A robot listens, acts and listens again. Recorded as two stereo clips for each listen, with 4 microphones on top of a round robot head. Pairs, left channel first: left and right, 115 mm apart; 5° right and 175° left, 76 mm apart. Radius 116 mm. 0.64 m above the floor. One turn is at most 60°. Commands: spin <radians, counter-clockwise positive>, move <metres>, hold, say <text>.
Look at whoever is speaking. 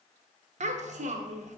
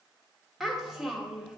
spin -1.05
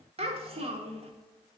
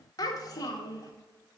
spin -0.87
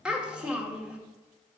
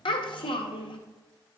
say Facing the child speaking, 1 to 2 m away.